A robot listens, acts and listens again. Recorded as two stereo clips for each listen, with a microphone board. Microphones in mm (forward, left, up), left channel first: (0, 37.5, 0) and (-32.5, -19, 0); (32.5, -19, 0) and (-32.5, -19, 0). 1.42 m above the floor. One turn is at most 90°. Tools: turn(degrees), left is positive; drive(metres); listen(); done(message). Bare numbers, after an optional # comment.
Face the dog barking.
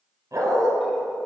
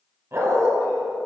# The dog barking: 145° right.
turn(-90)
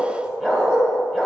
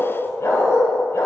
# The dog barking is now 30° right.
turn(-30)
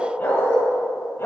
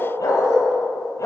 # The dog barking is now 15° left.
turn(15)
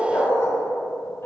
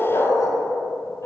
# The dog barking is now 20° left.
turn(20)
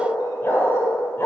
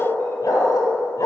# The dog barking is now 10° left.
turn(10)
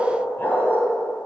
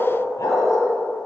done("Facing the dog barking, 2 to 4 m away.")